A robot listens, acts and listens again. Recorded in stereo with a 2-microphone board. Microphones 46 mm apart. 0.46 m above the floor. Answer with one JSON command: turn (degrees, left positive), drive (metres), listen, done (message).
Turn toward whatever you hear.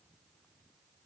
{"listen": true}
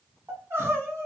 {"turn": -55}
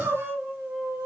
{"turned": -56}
{"turn": -70}
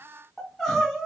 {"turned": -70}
{"done": "Found it: crying, straight ahead, 1 to 2 m away."}